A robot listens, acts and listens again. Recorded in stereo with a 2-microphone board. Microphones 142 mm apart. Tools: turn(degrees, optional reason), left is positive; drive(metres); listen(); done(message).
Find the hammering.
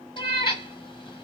listen()
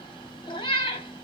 listen()
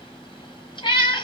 done("I can't make out hammering to turn to.")